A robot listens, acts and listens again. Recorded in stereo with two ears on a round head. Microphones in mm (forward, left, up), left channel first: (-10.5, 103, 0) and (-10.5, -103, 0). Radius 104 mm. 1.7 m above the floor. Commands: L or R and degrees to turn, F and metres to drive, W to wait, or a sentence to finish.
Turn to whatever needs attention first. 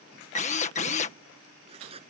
W
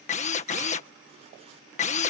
W
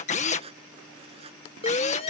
L25
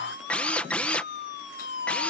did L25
L130
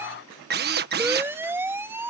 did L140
R10
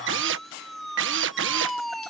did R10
Found it: a siren, straight ahead.